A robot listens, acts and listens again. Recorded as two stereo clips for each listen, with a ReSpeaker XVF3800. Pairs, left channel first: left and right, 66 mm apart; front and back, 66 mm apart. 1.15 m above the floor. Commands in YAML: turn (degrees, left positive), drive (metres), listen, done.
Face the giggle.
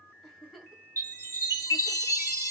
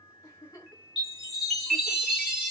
done: "Facing the giggle, 1 to 2 m away."